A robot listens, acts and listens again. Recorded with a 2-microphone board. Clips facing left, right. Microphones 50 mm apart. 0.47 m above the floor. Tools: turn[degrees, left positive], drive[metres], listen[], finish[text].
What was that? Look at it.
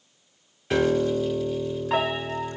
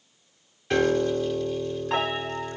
Action: turn[30]
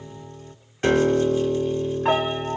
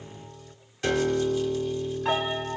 Thought: So it is at 145° left.
Action: turn[145]
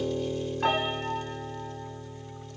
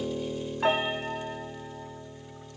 Thought: The piano is now 10° right.
Action: turn[-10]
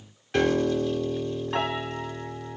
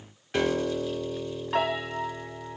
Action: finish[Found it: a piano, straight ahead.]